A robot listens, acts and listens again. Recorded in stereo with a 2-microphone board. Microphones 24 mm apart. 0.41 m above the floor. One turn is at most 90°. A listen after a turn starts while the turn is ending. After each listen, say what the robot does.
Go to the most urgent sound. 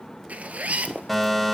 Turn 30° left.
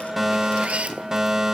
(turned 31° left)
Turn 30° right.
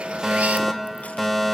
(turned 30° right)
Drive 1.0 m forward.
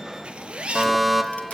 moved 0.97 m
Turn 10° right.
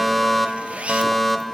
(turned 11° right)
Drive 1.0 m forward.
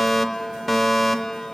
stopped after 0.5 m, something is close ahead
Arrived at the fire alarm, straight ahead.